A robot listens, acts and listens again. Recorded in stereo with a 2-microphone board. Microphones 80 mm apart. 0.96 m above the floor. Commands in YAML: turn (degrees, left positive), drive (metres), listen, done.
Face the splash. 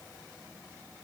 listen: true
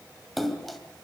turn: 30
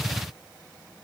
listen: true
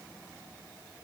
done: "I heard a splash, but can't make it out now. It was about 30° right or 150° left."